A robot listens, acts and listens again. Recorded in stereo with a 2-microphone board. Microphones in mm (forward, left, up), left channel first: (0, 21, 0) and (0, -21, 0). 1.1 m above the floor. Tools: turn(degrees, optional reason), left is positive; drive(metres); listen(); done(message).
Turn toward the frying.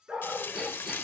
turn(degrees=70, reason="The frying: about 70° left or 110° left.")
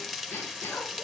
done("Found it: frying, straight ahead, 1 to 2 m away.")